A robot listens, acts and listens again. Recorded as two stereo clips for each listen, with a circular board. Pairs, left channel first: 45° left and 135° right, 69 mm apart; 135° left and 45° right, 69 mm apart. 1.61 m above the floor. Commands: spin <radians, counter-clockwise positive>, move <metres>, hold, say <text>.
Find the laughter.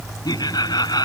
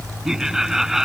spin 0.70
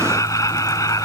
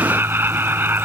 spin 0.26
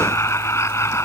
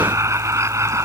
say Found it: laughter, straight ahead.